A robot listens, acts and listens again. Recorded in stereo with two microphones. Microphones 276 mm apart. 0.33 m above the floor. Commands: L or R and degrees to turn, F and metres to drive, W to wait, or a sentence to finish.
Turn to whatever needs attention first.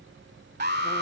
R35
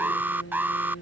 R10
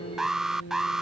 Facing the alarm.